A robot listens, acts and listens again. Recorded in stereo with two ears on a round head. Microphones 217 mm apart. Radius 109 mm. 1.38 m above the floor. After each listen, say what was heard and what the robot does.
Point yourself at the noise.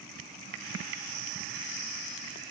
Keep listening.
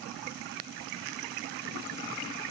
Keep listening.
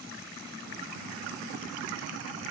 I can't make out anything.